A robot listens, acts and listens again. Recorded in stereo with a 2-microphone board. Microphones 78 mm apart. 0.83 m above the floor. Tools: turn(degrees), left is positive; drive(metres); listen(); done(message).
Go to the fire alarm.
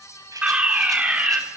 turn(degrees=-15)
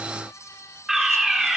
drive(metres=1.0)
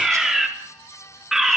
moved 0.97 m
drive(metres=1.0)
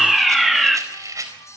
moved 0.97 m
drive(metres=1.0)
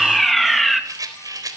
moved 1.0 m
drive(metres=1.0)
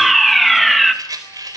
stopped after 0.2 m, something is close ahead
done("I am next to the fire alarm.")